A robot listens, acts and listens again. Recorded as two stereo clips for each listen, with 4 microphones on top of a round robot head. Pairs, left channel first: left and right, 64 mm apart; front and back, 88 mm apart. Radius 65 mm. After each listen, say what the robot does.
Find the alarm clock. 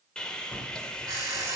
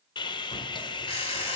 Turn 35° right.
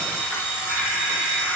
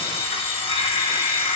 Found it: an alarm clock, straight ahead.